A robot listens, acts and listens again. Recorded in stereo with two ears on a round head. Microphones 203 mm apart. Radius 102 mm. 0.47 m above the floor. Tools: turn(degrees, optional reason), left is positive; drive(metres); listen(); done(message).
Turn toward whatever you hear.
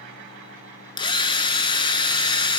turn(degrees=20, reason="The drill: about 20° left or 160° left.")
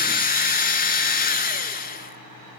turn(degrees=140, reason="So it is at 140° left.")
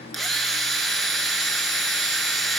done("Found it: a drill, straight ahead.")